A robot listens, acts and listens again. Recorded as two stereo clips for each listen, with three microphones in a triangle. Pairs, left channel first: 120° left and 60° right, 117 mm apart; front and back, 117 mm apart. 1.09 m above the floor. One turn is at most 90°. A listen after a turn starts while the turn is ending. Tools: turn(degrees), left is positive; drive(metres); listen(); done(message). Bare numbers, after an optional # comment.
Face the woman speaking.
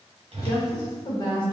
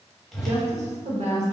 # The woman speaking: 170° left.
turn(90)
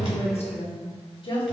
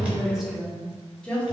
# The woman speaking is now 80° left.
turn(80)
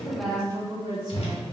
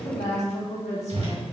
# The woman speaking is now 10° right.
turn(-10)
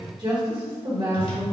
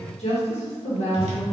# The woman speaking is now 25° right.
turn(-25)
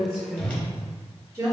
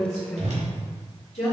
# The woman speaking is now 10° left.
turn(10)
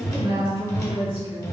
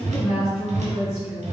done("Facing the woman speaking, 1 to 2 m away.")